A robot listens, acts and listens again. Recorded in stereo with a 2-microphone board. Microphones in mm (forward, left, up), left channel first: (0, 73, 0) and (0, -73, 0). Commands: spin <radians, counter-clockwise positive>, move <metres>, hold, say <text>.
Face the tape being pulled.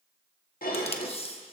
spin 0.70
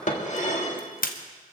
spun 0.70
spin 1.75
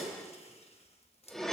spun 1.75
hold
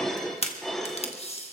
spin 0.79
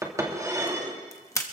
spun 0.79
spin 0.35
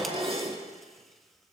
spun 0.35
hold
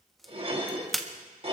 say Facing the tape being pulled, 1 to 2 m away.